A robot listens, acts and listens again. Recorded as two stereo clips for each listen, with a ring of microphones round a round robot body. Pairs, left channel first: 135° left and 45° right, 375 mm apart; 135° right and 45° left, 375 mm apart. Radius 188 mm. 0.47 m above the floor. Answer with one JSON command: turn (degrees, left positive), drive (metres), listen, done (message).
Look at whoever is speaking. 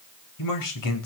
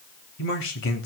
{"turn": 170}
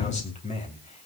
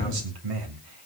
{"turn": 65}
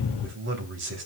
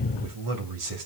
{"turn": 10}
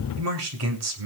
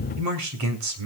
{"done": "Found it: a man speaking, straight ahead, 2 to 4 m away."}